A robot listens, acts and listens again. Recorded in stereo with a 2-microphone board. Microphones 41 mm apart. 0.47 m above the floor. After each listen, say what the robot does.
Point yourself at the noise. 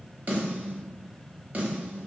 Turn 40° right.
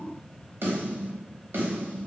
Turn 95° right.
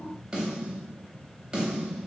Turn 20° right.
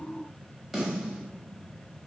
Found it: a snare drum, straight ahead.